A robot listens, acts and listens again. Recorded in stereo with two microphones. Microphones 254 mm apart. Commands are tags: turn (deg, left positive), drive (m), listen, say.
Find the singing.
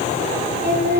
<turn deg="-40"/>
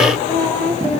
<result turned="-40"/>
<say>Facing the singing, over 4 m away.</say>